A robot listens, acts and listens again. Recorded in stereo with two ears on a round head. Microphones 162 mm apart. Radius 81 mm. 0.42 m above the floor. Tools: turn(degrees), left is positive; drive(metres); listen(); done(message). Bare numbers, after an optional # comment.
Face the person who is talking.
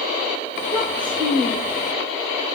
# The child speaking: about 30° right or 150° right.
turn(-30)
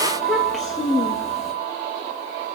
done("Facing the child speaking, over 4 m away.")